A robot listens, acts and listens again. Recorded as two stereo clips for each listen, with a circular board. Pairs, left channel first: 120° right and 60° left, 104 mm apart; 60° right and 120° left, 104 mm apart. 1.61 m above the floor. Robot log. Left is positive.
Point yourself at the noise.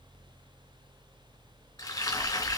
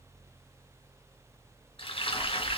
note: The frying: 70° right.
cmd yaw -70
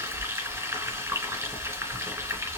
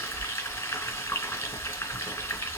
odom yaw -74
end: Found it: frying, straight ahead, 2 to 4 m away.